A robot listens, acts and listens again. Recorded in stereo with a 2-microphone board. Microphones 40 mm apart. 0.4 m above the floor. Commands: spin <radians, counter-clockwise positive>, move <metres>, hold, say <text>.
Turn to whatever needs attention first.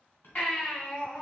spin 0.61
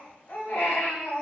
spin 1.92
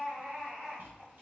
spin -0.52
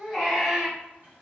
spin -0.26
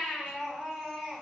say Found it: a baby crying, straight ahead.